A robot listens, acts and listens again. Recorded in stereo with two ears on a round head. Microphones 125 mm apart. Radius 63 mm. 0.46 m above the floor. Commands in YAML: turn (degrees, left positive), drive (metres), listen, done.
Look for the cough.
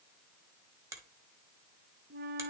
listen: true
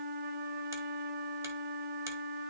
listen: true
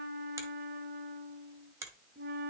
done: "I can't make out a cough to turn to."